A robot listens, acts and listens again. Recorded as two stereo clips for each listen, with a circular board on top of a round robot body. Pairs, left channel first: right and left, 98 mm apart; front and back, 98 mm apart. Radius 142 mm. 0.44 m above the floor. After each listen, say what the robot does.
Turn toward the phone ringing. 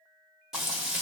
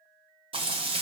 Keep listening.
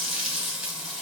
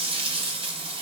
Keep listening.
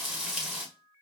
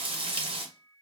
I can't make out a phone ringing, only frying.